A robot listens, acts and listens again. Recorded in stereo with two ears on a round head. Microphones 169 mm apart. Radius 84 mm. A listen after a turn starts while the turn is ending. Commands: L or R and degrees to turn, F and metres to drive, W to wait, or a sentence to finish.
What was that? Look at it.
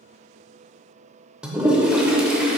R30
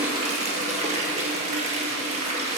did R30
R140
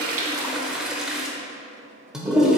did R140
Found it: a toilet flushing, straight ahead.